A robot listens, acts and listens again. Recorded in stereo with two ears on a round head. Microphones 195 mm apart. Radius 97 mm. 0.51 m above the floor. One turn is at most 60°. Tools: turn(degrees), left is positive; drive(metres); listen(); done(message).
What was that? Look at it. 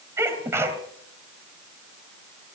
turn(degrees=-30)
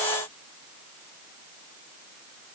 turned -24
listen()
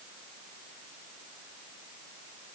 done("I heard a sneeze, but can't make it out now. It was about 10° left or 145° right.")